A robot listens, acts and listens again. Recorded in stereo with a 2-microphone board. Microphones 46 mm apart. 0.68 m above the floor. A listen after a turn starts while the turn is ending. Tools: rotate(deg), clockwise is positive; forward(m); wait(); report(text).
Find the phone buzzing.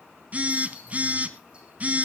rotate(35)
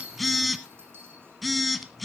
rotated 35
report("Facing the phone buzzing, 1 to 2 m away.")